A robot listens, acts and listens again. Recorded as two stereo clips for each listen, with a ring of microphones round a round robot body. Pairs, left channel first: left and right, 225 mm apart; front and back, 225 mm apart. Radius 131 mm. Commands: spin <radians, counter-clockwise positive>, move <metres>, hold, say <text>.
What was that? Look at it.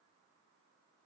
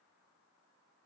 hold
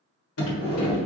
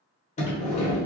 spin 1.13
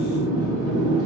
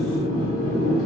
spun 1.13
spin -0.26
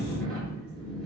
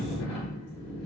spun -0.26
say Facing the sliding door, 1 to 2 m away.